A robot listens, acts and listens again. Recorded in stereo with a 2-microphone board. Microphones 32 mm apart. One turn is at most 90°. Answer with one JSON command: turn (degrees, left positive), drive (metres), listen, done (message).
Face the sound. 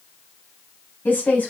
{"turn": 65}
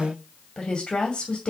{"turn": 30}
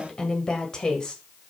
{"turn": 25}
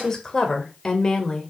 {"turn": 20}
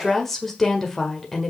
{"done": "Found it: a woman speaking, straight ahead, 1 to 2 m away."}